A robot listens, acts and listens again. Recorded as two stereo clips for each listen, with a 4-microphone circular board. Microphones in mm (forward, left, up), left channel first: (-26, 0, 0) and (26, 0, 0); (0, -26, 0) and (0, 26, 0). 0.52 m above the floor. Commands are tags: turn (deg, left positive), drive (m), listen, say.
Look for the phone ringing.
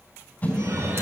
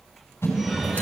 <say>Facing the phone ringing.</say>